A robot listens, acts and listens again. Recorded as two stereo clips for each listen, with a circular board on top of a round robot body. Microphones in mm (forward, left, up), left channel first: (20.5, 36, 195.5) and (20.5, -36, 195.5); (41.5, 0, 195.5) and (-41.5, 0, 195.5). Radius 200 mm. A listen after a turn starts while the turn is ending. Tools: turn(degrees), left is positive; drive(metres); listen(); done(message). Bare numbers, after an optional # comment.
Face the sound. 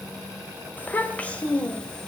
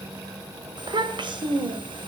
# The child speaking: 165° left.
turn(165)
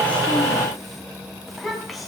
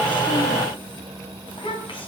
done("Facing the child speaking.")